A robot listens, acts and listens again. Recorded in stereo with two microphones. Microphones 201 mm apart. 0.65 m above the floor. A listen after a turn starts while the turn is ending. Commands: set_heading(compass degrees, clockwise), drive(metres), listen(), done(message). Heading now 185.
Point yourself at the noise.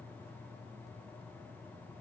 listen()
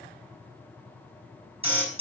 set_heading(215)
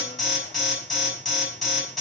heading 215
done("Facing the alarm, over 4 m away.")